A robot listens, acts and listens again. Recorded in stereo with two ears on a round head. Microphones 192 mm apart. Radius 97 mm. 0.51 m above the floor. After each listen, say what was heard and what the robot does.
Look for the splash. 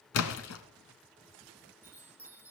The splash: about 70° left or 110° left. Turn 70° left.
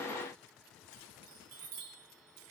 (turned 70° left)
Keep listening.
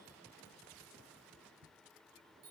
I heard a splash, but can't make it out now. It was about straight ahead or 40° left.